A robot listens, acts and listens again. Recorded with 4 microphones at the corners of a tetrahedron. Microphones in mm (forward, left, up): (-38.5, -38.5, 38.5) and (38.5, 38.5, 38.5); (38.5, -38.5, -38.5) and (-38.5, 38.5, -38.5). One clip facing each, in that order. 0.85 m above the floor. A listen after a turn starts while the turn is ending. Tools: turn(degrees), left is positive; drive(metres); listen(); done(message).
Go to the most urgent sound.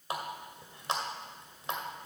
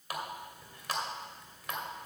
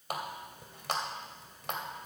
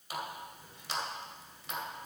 listen()
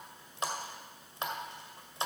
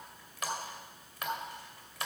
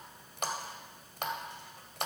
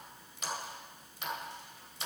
listen()
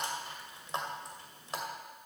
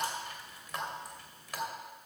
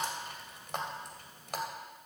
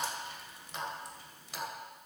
done("I can't make out anything urgent, only a running tap.")